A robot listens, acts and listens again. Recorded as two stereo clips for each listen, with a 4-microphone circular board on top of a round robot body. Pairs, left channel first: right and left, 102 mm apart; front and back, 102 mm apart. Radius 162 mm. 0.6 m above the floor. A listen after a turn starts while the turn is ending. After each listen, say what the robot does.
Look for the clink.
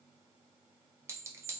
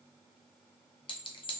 Turn 30° left.
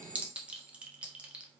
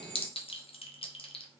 Turn 15° left.
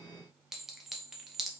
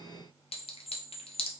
Found it: a clink, straight ahead.